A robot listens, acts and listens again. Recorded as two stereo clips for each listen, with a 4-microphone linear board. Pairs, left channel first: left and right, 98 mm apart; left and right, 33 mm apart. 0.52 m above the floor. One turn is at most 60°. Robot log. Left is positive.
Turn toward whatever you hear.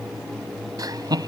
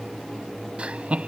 note: The laughter: about 45° right or 135° right.
cmd yaw -45
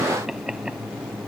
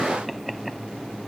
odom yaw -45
end: Found it: laughter, straight ahead.